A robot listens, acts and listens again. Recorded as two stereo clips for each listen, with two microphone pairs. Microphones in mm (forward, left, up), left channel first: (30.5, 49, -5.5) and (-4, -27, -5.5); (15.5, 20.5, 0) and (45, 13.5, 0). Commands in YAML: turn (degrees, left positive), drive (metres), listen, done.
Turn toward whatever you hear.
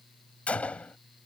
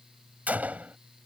done: "Found it: a gunshot, straight ahead."